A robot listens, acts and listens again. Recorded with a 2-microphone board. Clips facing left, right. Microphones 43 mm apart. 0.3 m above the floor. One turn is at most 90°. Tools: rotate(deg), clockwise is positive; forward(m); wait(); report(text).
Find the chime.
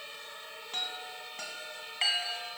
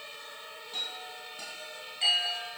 rotate(-55)
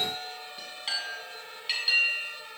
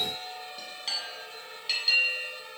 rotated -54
rotate(-10)
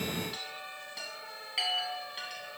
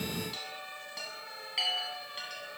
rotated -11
report("Found it: a chime, straight ahead, 2 to 4 m away.")